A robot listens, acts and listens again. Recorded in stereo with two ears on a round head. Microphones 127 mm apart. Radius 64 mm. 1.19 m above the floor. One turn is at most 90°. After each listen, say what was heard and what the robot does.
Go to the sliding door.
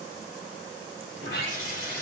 Turn 90° left.
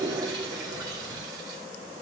Keep listening.
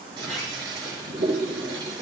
The sliding door is now 10° left. Turn 10° left.
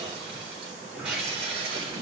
Drive 1.0 m forward.
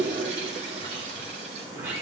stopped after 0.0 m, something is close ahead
The sliding door is now 15° right. Turn 15° right.
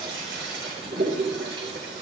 Keep listening.
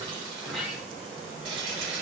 Something is in my way. I am facing the sliding door but have not reached it.